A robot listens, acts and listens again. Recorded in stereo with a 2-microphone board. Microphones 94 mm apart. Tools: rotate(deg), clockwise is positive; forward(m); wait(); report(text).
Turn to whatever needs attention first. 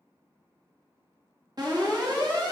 rotate(45)
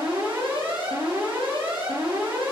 rotate(85)
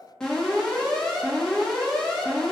rotate(-10)
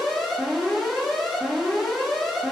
report("Facing the alarm, 2 to 4 m away.")